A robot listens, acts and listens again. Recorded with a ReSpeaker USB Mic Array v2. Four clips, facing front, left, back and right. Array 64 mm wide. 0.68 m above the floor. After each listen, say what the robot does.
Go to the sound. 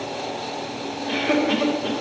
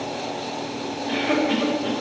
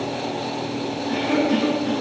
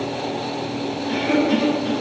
Turn 10° left.
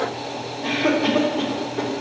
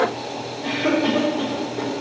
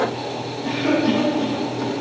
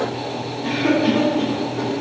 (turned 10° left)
Drive 1.0 m forward.
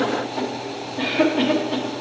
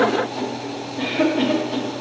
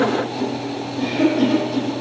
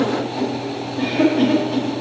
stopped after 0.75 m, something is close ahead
I am next to the cough.